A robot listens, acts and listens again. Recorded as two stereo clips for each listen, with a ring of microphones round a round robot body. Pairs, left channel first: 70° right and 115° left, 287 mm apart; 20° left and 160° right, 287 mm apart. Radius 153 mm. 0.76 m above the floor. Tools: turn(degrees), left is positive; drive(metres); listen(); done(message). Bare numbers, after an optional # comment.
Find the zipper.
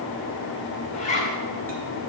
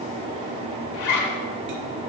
done("Found it: a zipper, straight ahead.")